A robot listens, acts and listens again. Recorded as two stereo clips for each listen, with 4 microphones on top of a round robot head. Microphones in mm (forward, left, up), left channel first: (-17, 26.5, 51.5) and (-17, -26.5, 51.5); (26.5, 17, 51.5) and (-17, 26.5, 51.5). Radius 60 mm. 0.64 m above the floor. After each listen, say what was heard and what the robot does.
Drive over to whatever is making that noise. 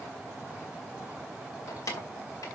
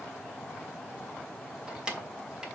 The keys jangling: 100° left. Turn 100° left.
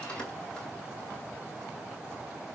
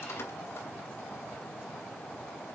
Keep listening.
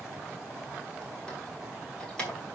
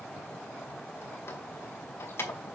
The keys jangling is now 20° left. Turn 20° left.
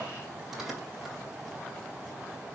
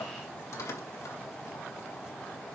Drive 1.0 m forward.
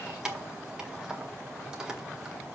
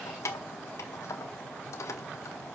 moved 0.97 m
The keys jangling is now 10° right. Turn 10° right.
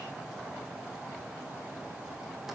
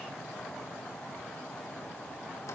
Keep listening.
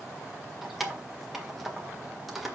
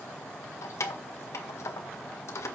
Drive 1.0 m forward.
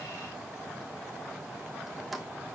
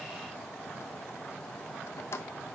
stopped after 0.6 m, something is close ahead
I am next to the keys jangling.